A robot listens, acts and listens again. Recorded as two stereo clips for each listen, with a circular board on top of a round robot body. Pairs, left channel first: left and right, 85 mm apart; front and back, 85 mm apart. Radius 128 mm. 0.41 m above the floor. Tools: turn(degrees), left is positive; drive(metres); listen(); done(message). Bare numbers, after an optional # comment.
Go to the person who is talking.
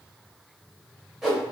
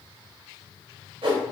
listen()
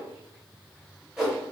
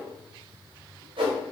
listen()
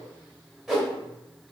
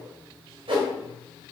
done("I can't make out anyone speaking, only a whoosh.")